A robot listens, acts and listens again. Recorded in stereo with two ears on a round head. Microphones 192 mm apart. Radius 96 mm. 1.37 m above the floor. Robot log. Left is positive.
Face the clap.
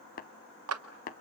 cmd yaw -90
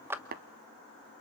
note: So it is at 10° right.
cmd yaw -10
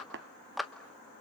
end: Found it: a clap, straight ahead.